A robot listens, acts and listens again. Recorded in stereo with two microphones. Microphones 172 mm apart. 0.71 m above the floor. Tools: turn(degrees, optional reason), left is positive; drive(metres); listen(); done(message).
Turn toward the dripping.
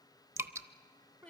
turn(degrees=-15, reason="The dripping: about 15° right or 165° right.")
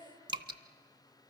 turn(degrees=-150, reason="So it is at 150° right.")
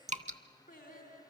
turn(degrees=-45, reason="The dripping is now 45° right.")
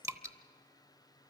turn(degrees=-20, reason="The dripping is now 20° right.")
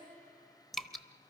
done("Found it: dripping, straight ahead, under 1 m away.")